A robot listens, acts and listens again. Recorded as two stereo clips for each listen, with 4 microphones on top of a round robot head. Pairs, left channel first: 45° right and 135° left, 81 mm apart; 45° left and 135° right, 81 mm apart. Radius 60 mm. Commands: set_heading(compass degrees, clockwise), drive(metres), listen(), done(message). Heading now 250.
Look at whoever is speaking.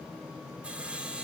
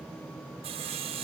listen()
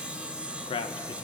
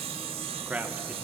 set_heading(310)
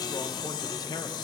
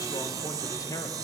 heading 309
done("Found it: a man speaking, straight ahead, 1 to 2 m away.")